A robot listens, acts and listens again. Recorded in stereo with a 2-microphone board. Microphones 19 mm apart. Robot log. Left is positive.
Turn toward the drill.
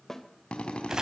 cmd yaw +90
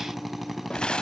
note: So it is at 10° right.
cmd yaw -10
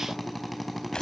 end: Found it: a drill, straight ahead.